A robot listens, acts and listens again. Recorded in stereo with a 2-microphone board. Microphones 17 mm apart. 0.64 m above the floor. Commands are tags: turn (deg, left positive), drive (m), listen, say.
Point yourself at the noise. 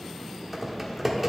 <turn deg="-30"/>
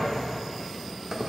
<turn deg="-145"/>
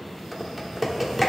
<turn deg="-15"/>
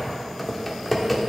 <say>Facing the typing on a keyboard.</say>